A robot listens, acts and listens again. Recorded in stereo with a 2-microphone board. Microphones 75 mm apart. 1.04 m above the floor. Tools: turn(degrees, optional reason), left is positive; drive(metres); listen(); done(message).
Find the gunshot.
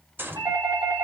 turn(degrees=-30, reason="The gunshot: about 30° right or 150° right.")
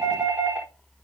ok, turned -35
listen()
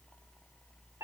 done("I heard a gunshot, but can't make it out now. It was about 5° left or 115° right.")